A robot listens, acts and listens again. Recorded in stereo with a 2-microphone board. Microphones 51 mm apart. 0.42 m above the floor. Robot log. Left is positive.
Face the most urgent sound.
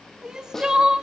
cmd yaw -30
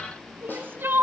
note: So it is at 135° right.
cmd yaw -135
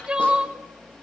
note: The crying is now 15° right.
cmd yaw -15
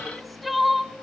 end: Found it: crying, straight ahead.